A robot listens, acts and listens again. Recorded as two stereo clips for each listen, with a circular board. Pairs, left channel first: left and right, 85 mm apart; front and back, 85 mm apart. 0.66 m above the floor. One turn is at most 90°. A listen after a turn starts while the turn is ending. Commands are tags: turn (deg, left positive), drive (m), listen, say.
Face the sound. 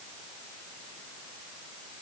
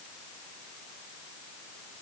<listen/>
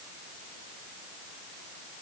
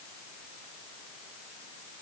<listen/>
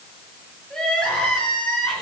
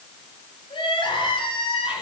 <say>Facing the crying, over 4 m away.</say>